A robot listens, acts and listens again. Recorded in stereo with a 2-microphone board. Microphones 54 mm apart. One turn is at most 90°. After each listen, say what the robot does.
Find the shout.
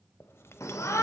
Turn 60° left.
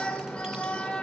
Turn 25° left.
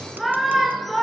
Found it: a shout, straight ahead.